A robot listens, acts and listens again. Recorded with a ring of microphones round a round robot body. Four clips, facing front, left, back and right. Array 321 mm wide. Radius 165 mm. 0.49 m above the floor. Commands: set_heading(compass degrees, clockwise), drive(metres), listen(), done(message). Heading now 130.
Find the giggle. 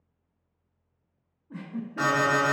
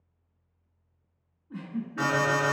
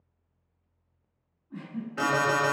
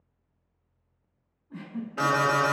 set_heading(120)
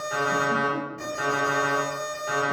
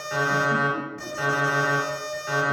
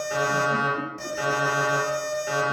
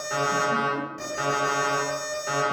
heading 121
listen()
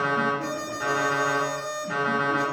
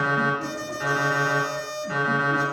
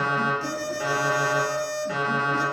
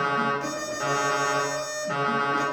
listen()
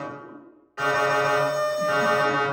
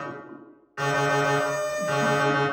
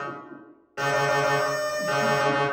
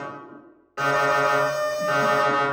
done("I heard a giggle from this way, but can't make it out now.")